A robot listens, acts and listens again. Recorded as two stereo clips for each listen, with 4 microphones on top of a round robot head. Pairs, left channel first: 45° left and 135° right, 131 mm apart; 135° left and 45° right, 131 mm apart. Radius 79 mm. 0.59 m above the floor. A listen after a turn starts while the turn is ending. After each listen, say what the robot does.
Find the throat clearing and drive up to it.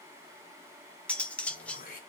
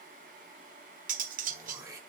Turn 20° left.
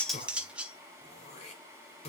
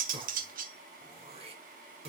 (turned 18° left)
Drive 1.0 m forward.
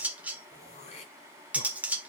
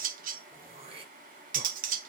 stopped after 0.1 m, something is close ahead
Blocked. The throat clearing is further on, straight ahead.